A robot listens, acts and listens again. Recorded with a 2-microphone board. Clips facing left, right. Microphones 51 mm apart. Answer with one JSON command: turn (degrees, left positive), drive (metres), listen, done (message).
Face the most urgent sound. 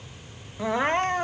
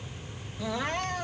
{"turn": 35}
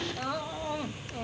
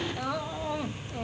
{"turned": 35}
{"done": "Facing the crying."}